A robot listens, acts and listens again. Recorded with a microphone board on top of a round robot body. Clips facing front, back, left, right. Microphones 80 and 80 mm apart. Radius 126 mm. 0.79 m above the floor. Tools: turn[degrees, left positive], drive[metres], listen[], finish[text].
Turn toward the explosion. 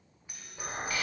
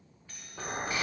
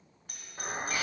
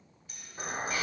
Thought: The explosion: 175° left.
Action: turn[175]
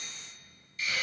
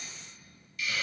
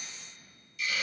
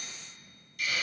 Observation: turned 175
Action: finish[Facing where the explosion came from. I can't hear it now.]